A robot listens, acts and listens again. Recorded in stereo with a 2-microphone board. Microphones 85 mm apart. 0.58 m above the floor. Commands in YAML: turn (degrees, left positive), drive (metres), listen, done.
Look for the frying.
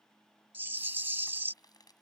turn: 55
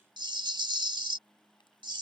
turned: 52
listen: true
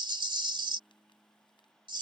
listen: true
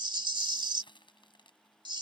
turn: 75
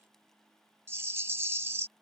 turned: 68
listen: true
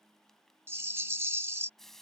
done: "Facing the frying."